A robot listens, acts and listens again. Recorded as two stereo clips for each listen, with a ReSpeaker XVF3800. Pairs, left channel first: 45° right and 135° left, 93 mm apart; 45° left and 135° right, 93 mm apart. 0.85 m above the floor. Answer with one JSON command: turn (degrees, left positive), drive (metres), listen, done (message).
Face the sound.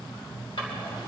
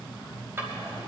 {"turn": -70}
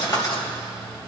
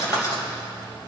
{"done": "Facing the drawer."}